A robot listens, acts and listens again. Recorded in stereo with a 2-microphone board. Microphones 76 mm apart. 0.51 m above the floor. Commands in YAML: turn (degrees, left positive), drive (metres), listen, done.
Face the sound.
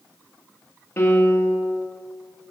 turn: 30
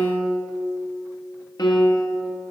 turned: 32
turn: 120
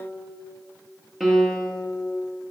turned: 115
done: "Found it: a piano, straight ahead, 1 to 2 m away."